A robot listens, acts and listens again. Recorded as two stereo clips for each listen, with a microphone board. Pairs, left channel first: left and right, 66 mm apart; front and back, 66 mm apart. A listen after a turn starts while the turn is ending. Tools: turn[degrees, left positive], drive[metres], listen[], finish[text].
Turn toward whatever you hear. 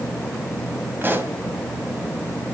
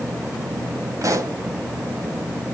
Thought: The pop: 145° right.
Action: turn[-145]
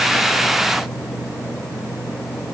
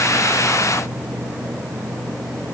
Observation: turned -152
Action: finish[Facing where the pop came from. I can't hear it now.]